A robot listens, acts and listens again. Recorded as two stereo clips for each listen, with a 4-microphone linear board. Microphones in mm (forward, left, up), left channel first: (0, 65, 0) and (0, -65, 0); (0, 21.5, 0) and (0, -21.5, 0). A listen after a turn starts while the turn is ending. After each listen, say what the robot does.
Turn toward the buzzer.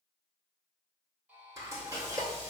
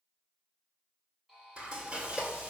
Turn 30° right.
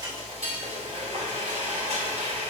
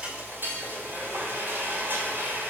Keep listening.
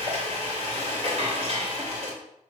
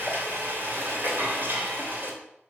Keep listening.
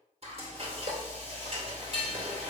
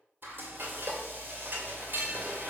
I heard a buzzer, but can't make it out now. It was about 15° left or 135° right.